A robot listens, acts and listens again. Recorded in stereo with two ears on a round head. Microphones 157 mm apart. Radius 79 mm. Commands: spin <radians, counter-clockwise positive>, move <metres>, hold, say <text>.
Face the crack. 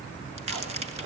spin -0.70
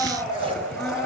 hold
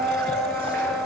say I heard a crack, but can't make it out now. It was about straight ahead or 100° right.